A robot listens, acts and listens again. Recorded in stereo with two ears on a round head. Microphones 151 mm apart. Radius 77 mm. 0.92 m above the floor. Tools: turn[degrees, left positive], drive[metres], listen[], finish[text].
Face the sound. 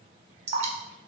Thought: The dripping: about 40° right or 140° right.
Action: turn[-40]
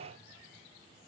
Action: listen[]
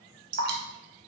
Thought: So it is at 90° right.
Action: turn[-90]
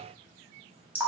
Thought: The dripping is now 10° right.
Action: turn[-10]
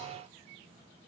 Action: listen[]
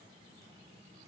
Action: listen[]
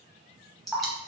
Action: finish[Found it: dripping, straight ahead, under 1 m away.]